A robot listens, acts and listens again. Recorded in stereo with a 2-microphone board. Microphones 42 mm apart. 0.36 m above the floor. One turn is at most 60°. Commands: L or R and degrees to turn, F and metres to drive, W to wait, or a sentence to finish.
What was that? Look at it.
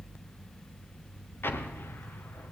L60
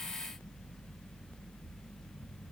W
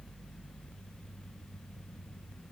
I heard an explosion, but can't make it out now. It was about 15° left or 45° left.